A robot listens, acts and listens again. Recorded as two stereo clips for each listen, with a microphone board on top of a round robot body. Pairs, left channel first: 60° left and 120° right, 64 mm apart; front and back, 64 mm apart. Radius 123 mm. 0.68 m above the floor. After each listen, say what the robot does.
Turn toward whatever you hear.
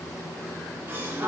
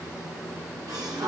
Turn 170° right.
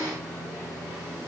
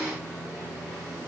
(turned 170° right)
Facing where the gasp came from. I can't hear it now.